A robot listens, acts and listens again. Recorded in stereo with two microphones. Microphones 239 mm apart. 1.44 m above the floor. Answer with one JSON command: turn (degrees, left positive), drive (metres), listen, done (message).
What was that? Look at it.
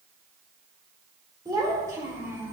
{"turn": -30}
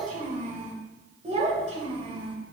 {"turn": -155}
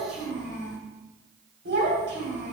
{"turn": -55}
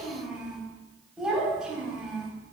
{"done": "Found it: a child speaking, straight ahead, 2 to 4 m away."}